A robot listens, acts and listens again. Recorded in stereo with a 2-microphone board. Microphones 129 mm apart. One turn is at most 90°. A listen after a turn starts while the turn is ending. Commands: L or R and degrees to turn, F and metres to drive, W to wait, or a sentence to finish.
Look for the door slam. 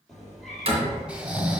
R50
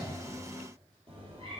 W
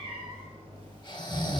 I heard a door slam, but can't make it out now. It was about straight ahead or 80° right.